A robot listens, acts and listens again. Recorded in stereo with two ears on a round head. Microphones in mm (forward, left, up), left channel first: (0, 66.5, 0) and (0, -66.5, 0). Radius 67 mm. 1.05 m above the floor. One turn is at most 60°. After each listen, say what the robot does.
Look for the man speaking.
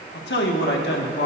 Turn 60° left.
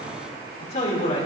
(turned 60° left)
Turn 50° left.
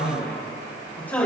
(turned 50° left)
Turn 10° left.
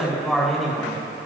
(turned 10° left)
Found it: a man speaking, straight ahead, over 4 m away.